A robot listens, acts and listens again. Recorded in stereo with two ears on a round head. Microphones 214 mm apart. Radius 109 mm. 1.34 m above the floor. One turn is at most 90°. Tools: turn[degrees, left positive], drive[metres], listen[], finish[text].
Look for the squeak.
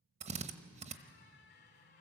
Thought: The squeak: about 50° left or 130° left.
Action: turn[50]
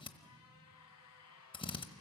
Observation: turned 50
Thought: So it is at 75° left.
Action: turn[75]
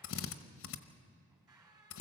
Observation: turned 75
Thought: The squeak is now 15° right.
Action: turn[-15]
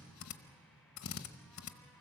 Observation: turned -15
Action: listen[]
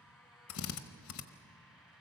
Action: finish[Facing the squeak, 2 to 4 m away.]